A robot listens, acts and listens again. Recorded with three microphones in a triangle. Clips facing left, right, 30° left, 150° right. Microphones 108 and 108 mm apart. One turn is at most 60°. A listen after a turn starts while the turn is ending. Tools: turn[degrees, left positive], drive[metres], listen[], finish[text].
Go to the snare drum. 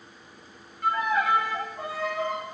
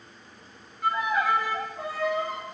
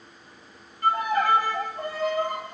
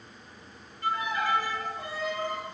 Action: listen[]
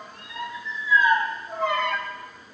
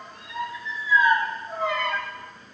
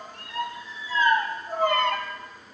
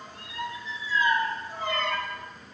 Action: listen[]
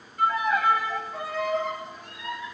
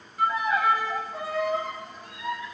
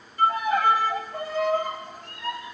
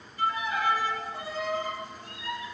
Action: finish[I can't make out a snare drum, only a violin.]